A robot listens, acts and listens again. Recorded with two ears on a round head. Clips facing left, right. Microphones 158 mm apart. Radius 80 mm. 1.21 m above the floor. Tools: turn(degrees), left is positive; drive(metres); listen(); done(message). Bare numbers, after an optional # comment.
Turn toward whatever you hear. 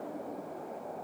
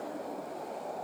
listen()
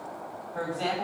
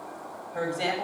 # The woman speaking: about 20° right or 160° right.
turn(-20)
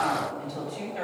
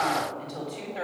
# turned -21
done("Found it: a woman speaking, straight ahead, over 4 m away.")